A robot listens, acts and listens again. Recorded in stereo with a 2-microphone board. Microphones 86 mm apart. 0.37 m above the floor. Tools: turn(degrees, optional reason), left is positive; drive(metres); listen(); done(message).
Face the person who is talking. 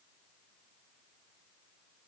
listen()
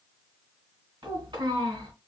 turn(degrees=-65, reason="The child speaking: about 65° right or 115° right.")
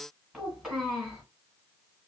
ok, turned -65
done("Facing the child speaking, 1 to 2 m away.")